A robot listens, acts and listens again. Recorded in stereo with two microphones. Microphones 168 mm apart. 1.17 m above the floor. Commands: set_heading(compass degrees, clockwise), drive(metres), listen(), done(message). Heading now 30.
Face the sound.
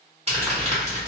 set_heading(70)
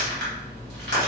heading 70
set_heading(170)
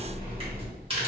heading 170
set_heading(205)
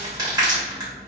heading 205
set_heading(225)
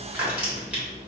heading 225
done("Facing the crumpling.")